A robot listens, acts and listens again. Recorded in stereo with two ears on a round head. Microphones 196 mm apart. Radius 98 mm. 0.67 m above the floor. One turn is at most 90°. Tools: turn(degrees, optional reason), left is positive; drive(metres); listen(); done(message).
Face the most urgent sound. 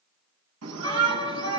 turn(degrees=-90)
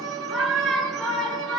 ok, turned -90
done("Found it: a shout, straight ahead.")